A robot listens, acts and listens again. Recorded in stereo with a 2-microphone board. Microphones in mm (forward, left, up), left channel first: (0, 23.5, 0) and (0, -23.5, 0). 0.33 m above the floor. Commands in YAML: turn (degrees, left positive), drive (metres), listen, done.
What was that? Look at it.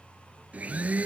turn: -35
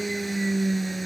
done: "Facing the blender."